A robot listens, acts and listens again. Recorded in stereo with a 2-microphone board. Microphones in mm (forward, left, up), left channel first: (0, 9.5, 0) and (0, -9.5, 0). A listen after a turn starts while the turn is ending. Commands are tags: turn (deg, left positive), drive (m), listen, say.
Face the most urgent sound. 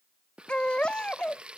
<turn deg="90"/>
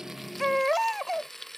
<say>Found it: a baby crying, straight ahead.</say>